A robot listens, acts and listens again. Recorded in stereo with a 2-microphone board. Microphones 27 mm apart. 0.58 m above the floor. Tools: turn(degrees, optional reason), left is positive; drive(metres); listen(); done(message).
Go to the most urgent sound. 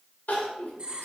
turn(degrees=65, reason="The crying: about 65° left or 115° left.")
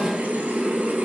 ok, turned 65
listen()
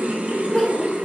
turn(degrees=25, reason="So it is at 25° left.")
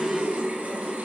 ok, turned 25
listen()
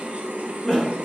turn(degrees=15, reason="The crying is now 15° left.")
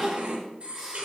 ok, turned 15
drive(metres=1.0)
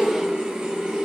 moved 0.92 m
listen()
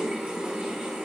listen()
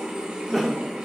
drive(metres=1.0)
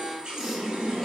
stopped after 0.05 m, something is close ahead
done("I am next to the crying.")